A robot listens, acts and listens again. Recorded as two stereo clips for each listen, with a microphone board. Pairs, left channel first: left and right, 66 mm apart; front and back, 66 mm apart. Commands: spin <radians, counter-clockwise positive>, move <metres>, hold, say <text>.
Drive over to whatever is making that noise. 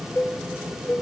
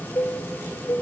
spin 0.52
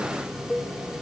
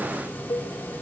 move 1.0
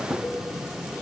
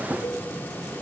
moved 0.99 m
hold
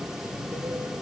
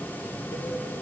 hold
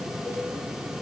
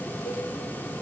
say I heard a cowbell from this way, but can't make it out now. I did not reach it.